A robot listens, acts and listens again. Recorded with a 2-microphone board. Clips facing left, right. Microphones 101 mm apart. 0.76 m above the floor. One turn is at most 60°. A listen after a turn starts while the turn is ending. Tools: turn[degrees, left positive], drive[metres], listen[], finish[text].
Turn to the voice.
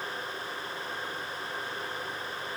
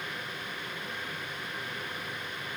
Action: listen[]
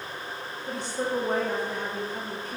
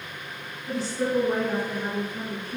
Thought: The woman speaking: about 55° left or 125° left.
Action: turn[55]
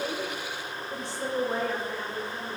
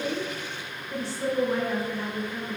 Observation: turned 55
Thought: So it is at 20° left.
Action: turn[20]
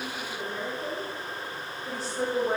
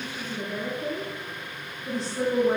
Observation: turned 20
Action: finish[Facing the woman speaking.]